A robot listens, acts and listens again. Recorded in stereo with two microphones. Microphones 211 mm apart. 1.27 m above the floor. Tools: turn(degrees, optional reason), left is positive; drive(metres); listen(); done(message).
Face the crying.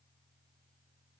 listen()
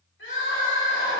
turn(degrees=90)
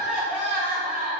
turn(degrees=-10, reason="So it is at 10° right.")
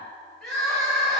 done("Facing the crying.")